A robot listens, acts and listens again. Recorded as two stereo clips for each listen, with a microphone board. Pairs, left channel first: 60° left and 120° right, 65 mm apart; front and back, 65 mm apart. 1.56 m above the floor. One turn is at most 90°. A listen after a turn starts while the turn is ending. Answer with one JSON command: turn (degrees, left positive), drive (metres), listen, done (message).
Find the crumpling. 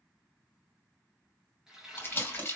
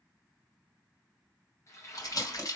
{"done": "Facing the crumpling."}